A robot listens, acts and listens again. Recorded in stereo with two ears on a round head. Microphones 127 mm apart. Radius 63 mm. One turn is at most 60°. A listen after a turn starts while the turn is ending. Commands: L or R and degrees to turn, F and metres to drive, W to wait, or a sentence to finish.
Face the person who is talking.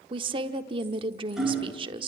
R35
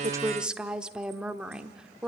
Found it: a woman speaking, straight ahead, 1 to 2 m away.